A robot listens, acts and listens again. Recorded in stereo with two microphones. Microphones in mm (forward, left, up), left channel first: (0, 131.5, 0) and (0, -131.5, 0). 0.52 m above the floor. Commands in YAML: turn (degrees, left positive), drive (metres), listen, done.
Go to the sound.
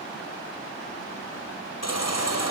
turn: 90
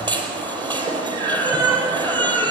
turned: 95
turn: -15
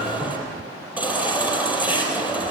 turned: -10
drive: 1.0
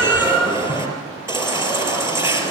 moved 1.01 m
turn: -10
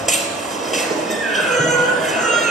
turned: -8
drive: 1.0
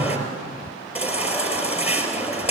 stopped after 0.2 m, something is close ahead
done: "Something is in my way. I am facing the baby crying but have not reached it."